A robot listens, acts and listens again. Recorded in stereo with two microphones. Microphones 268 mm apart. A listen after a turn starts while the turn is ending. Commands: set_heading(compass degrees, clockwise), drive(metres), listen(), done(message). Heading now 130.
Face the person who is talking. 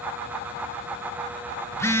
listen()
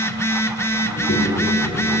set_heading(40)
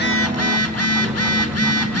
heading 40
set_heading(50)
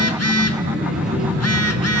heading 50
done("Found it: a child speaking, straight ahead.")